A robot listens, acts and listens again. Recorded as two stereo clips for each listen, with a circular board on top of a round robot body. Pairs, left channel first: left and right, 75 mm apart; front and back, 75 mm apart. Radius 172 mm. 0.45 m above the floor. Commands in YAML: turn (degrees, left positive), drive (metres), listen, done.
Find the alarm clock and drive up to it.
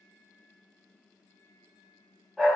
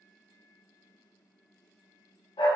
listen: true
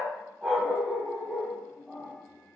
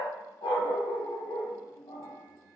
listen: true
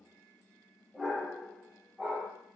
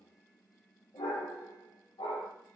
done: "I can't make out an alarm clock, only a dog barking."